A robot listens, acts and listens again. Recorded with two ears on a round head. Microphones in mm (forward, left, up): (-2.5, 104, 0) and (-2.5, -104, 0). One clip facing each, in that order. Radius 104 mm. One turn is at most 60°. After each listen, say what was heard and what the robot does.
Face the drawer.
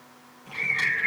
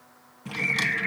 The drawer: about 60° right or 120° right. Turn 60° right.
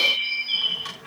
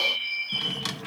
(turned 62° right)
So it is at 55° right. Turn 55° right.
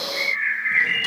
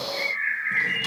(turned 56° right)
Keep listening.
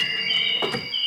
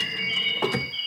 Found it: a drawer, straight ahead.